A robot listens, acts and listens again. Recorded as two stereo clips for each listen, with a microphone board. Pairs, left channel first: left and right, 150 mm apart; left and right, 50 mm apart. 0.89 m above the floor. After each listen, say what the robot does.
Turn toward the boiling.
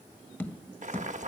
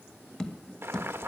Turn 55° right.
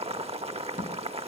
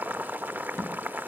Turn 55° right.
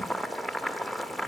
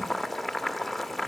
Found it: boiling, straight ahead.